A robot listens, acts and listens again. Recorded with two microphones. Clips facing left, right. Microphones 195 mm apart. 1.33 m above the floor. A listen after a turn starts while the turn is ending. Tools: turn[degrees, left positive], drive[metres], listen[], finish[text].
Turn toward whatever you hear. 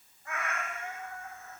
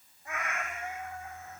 Thought: The cat meowing: about 20° right or 160° right.
Action: turn[-20]
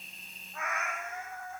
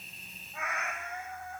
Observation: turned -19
Action: finish[Facing the cat meowing, 2 to 4 m away.]